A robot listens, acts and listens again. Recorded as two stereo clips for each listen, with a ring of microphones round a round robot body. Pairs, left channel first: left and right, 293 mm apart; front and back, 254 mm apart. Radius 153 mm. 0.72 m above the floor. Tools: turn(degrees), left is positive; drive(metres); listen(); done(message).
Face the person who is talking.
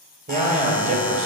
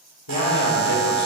turn(degrees=-25)
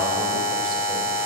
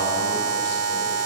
listen()
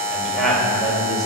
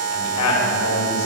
done("Facing the man speaking, 2 to 4 m away.")